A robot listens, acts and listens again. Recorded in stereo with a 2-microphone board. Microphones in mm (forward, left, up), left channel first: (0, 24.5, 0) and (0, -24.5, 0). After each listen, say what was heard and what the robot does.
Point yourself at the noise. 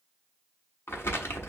The crumpling: about 60° left or 120° left. Turn 60° left.
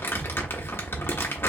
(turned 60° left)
So it is at 60° left. Turn 60° left.
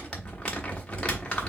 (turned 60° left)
The crumpling is now 25° left. Turn 25° left.
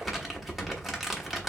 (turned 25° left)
Found it: crumpling, straight ahead.